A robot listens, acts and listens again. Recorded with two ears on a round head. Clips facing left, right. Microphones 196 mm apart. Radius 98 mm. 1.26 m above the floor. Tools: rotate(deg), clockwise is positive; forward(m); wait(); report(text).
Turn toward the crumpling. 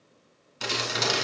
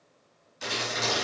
rotate(-70)
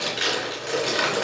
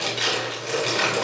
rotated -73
report("Found it: crumpling, straight ahead.")